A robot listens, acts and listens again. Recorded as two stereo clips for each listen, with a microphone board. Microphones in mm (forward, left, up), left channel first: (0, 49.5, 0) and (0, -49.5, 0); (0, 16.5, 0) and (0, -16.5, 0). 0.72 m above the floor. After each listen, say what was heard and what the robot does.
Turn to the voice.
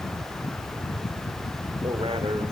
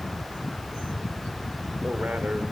The man speaking: about 65° right or 115° right. Turn 65° right.
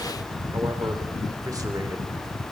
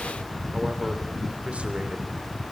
So it is at 40° right. Turn 40° right.
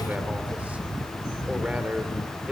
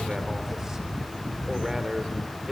The man speaking is now 15° right. Turn 15° right.
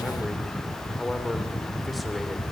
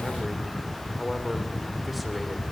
Facing the man speaking, 2 to 4 m away.